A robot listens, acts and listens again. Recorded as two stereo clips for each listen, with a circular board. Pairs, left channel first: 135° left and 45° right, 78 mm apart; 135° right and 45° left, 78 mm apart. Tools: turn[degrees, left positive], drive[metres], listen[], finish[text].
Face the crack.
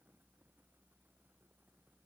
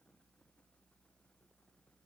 Action: listen[]
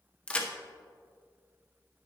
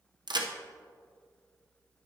Thought: The crack: 60° left.
Action: turn[60]
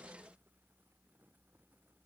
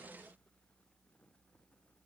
Action: finish[Facing where the crack came from. I can't hear it now.]